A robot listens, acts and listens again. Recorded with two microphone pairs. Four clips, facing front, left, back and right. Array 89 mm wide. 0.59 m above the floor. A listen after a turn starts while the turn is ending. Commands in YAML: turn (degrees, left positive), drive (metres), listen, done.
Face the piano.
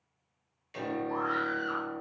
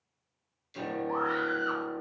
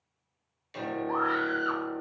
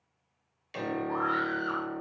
turn: -100
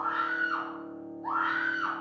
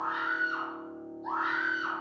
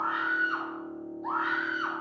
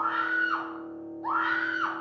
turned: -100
turn: -10
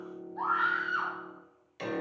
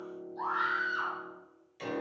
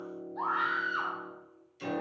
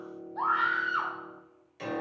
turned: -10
turn: -10
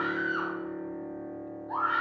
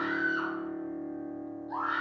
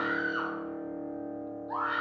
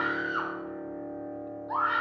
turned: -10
done: "Facing the piano."